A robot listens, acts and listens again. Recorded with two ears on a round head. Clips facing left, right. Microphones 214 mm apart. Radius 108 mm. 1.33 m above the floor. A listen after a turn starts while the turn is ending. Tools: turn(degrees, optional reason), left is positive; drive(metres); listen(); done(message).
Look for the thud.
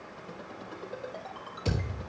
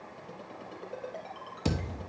turn(degrees=-60, reason="The thud: about 60° right or 120° right.")
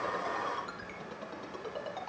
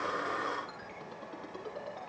listen()
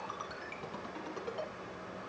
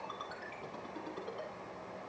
done("I heard a thud, but can't make it out now. It was about straight ahead or 60° right.")